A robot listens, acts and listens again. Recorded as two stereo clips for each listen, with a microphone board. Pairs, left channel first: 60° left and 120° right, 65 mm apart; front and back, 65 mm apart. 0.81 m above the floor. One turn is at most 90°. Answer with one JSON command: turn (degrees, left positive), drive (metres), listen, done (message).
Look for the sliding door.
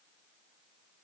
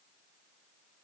{"listen": true}
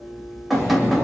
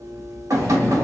{"turn": 20}
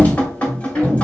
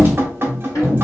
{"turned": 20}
{"done": "Found it: a sliding door, straight ahead."}